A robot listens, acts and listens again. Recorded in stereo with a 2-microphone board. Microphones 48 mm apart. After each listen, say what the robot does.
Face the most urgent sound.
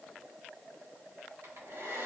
Keep listening.
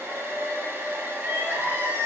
Turn 45° right.
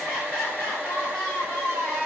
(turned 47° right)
Found it: crying, straight ahead, 1 to 2 m away.